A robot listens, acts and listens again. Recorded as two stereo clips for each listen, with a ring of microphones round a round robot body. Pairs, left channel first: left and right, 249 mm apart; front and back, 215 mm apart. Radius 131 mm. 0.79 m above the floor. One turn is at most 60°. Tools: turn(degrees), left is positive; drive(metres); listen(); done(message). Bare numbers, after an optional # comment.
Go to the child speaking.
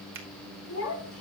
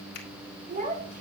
# The child speaking: 130° left.
turn(60)
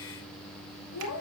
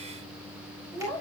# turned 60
# The child speaking is now 75° left.
turn(60)
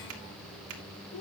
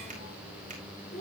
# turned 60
# The child speaking is now 60° left.
turn(60)
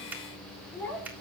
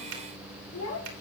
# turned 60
drive(1.0)
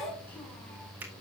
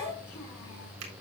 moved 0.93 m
drive(1.0)
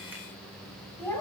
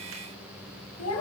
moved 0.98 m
# The child speaking is now 10° left.
turn(10)
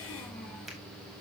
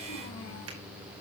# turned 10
listen()
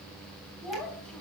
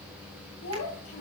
drive(1.0)
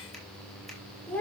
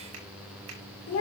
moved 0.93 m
drive(1.0)
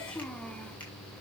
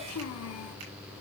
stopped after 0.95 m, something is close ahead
done("Arrived at the child speaking, straight ahead.")